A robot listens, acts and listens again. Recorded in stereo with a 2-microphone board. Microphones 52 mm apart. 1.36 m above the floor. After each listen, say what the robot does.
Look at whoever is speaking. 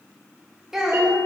Turn 30° right.
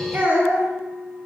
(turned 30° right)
Turn 145° right.
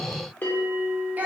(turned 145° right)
Turn 35° right.
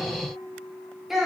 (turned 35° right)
Facing the child speaking.